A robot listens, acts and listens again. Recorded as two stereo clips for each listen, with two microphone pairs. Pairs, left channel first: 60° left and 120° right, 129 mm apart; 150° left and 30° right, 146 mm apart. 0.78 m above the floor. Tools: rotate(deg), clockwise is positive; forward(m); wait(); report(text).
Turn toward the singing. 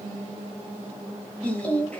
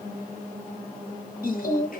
rotate(-140)
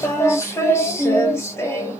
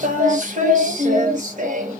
report("Facing the singing.")